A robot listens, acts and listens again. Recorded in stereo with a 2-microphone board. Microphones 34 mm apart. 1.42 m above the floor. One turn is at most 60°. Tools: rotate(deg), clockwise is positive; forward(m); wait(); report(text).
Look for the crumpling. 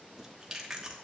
wait()
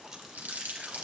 rotate(55)
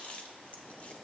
wait()
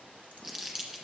report("Found it: crumpling, straight ahead, 1 to 2 m away.")